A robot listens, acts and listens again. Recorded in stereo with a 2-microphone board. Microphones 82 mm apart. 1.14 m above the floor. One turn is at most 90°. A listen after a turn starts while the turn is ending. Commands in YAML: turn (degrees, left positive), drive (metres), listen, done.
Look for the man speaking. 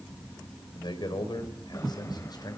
turn: 55
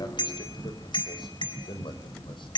turn: 80
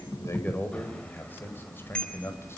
turn: 30
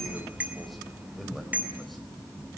listen: true
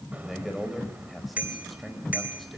done: "Found it: a man speaking, straight ahead."